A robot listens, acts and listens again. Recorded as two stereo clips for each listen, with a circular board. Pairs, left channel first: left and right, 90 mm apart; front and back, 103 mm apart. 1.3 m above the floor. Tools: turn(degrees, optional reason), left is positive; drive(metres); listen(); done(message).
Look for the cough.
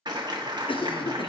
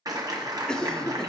turn(degrees=85, reason="The cough: 85° left.")
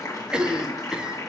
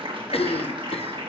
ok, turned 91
turn(degrees=-10, reason="The cough is now 10° right.")
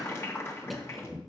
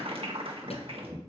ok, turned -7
listen()
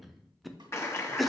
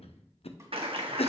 done("Found it: a cough, straight ahead, under 1 m away.")